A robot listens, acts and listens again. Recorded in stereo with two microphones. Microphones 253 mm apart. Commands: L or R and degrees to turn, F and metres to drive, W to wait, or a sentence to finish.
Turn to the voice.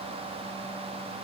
W
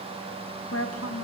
L70
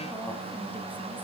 W
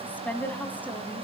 Facing the woman speaking, 2 to 4 m away.